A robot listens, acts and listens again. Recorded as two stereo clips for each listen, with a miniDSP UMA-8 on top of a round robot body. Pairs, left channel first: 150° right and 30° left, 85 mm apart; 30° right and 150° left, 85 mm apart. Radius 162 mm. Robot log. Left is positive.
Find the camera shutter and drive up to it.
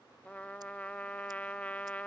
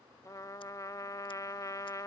cmd idle
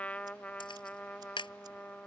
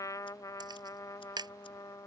note: The camera shutter: 175° right.
cmd yaw -175
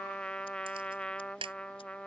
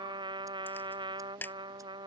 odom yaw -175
note: The camera shutter is now 40° left.
cmd yaw +40
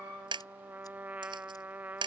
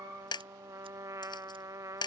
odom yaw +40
cmd fwd 1.0
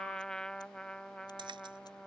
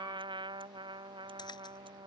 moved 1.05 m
cmd idle
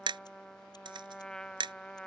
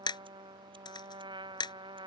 cmd fwd 1.0
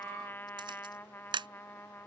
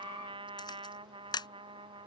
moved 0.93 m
cmd fwd 1.0
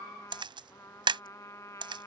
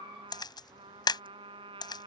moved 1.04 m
cmd fwd 1.0
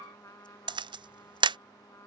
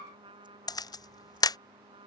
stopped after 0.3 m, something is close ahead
note: The camera shutter is now 10° left.
cmd yaw +10
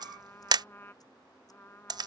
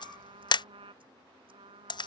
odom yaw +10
end: Arrived at the camera shutter, straight ahead.